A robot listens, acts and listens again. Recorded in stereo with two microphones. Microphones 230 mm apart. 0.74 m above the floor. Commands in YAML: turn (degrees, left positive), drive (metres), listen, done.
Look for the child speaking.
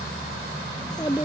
turn: 15
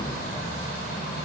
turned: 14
listen: true
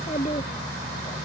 turn: 30
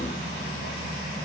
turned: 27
listen: true
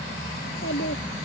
turn: 120
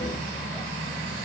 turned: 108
turn: 10
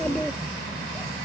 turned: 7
listen: true
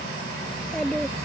done: "Facing the child speaking."